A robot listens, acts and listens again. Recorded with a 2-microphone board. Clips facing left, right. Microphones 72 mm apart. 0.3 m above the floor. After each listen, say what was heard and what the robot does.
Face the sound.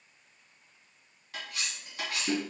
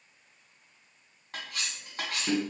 The cutlery clinking: about 50° right or 130° right. Turn 50° right.
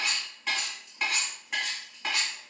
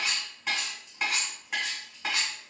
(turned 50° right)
Found it: cutlery clinking, straight ahead, 1 to 2 m away.